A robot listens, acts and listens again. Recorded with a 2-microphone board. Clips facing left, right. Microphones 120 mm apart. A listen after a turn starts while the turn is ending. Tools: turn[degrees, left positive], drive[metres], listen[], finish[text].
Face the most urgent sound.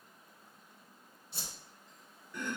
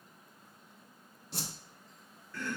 Action: listen[]
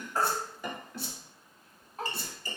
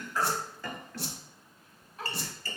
Thought: The baby crying: about 40° left or 140° left.
Action: turn[40]
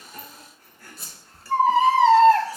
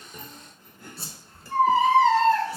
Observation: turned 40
Thought: So it is at 95° left.
Action: turn[95]
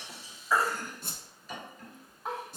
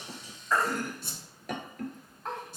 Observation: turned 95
Action: finish[Facing the baby crying, 1 to 2 m away.]